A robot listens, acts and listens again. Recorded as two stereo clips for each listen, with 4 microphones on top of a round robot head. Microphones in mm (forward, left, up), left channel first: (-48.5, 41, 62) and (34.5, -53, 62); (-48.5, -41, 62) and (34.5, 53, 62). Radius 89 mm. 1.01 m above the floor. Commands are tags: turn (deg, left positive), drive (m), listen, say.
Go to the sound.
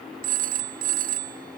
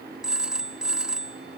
<turn deg="-35"/>
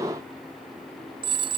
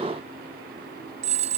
<drive m="1.0"/>
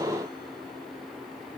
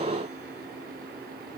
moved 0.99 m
<listen/>
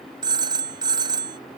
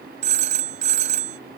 <turn deg="10"/>
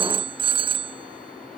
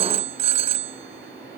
<drive m="1.0"/>
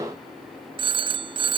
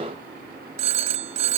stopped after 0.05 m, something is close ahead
<say>Something is in my way. I am facing the phone ringing but have not reached it.</say>